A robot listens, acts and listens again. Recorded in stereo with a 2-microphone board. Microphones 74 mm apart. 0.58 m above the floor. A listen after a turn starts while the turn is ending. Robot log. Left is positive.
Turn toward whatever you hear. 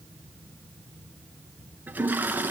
note: The toilet flushing: about 25° right or 155° right.
cmd yaw -25
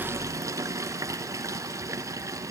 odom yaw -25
note: So it is at 130° right.
cmd yaw -130
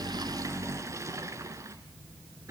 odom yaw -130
note: The toilet flushing is now 50° right.
cmd yaw -50
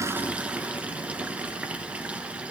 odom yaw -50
note: The toilet flushing is now 20° right.
cmd yaw -20
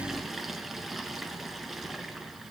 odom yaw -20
end: Found it: a toilet flushing, straight ahead.